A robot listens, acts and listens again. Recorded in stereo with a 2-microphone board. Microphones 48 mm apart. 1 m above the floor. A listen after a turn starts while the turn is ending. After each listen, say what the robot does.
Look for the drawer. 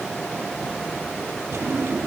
Turn 65° right.
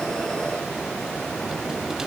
Keep listening.
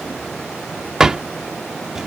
Turn 15° right.
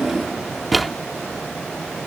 Facing the drawer.